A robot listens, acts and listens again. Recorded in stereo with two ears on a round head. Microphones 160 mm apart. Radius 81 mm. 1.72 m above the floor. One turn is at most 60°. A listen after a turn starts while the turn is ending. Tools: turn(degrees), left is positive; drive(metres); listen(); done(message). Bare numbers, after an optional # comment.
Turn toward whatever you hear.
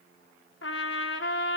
# The trumpet: about 70° left or 110° left.
turn(60)
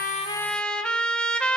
done("Found it: a trumpet, straight ahead, 1 to 2 m away.")